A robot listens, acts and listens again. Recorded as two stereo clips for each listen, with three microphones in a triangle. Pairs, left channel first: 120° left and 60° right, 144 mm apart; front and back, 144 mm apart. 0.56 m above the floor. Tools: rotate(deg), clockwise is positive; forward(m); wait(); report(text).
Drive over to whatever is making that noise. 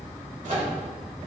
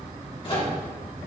rotate(45)
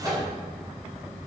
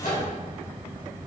forward(1.0)
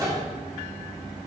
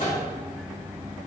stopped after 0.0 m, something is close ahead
report("Something is in my way. I am facing the microwave but have not reached it.")